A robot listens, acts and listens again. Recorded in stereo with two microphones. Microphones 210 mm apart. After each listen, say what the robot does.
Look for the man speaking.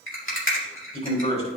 Turn 30° left.
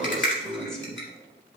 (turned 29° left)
Facing the man speaking, 2 to 4 m away.